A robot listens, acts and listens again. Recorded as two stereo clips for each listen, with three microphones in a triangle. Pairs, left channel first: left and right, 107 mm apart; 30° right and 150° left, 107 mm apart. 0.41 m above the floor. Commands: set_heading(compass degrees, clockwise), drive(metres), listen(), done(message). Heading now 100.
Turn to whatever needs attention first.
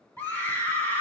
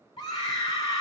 set_heading(80)
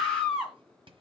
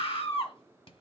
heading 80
done("Found it: a scream, straight ahead, 2 to 4 m away.")